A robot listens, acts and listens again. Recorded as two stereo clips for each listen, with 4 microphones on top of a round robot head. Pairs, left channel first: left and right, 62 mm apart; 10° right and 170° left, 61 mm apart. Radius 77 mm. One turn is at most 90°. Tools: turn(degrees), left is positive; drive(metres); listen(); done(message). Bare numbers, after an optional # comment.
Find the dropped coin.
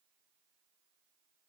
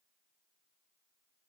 listen()
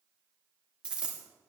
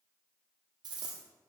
# The dropped coin: 160° right.
turn(-90)
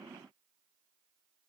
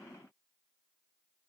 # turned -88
# Nothing new. It was at 75° right.
turn(-75)
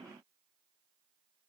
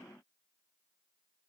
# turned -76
done("I heard a dropped coin from this way, but can't make it out now.")